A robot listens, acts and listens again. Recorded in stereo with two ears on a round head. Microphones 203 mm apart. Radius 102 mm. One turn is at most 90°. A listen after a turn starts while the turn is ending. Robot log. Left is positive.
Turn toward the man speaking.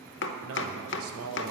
note: The man speaking: about 70° right or 110° right.
cmd yaw -70
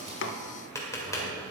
cmd idle
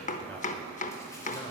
cmd idle
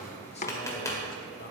note: So it is at 45° left.
cmd yaw +45
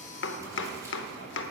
cmd idle
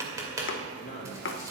note: The man speaking is now 35° left.
cmd yaw +35
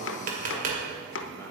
cmd idle
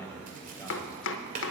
note: The man speaking is now 10° left.
cmd yaw +10
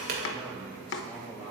end: Facing the man speaking.